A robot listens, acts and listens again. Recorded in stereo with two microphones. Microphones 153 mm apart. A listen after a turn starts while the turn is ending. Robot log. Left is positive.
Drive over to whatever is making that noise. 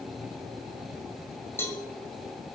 note: The cowbell: about 15° left or 165° left.
cmd yaw +15
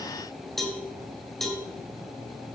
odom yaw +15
cmd fwd 1.0
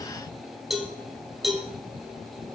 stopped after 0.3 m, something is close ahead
end: Blocked. The cowbell is further on, straight ahead.